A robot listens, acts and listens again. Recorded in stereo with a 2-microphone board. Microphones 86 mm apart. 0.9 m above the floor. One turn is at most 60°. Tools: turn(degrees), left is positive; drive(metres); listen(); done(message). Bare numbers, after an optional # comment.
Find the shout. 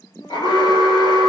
listen()
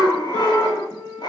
# The shout: about 35° left or 145° left.
turn(35)
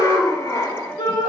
# So it is at 110° left.
turn(60)
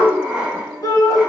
# The shout is now 45° left.
turn(45)
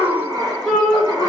done("Found it: a shout, straight ahead, 2 to 4 m away.")